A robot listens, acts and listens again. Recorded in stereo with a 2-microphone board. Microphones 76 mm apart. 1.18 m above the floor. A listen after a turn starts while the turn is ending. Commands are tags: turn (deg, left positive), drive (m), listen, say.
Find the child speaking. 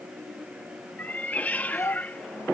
<turn deg="40"/>
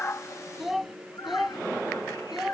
<say>Found it: a child speaking, straight ahead.</say>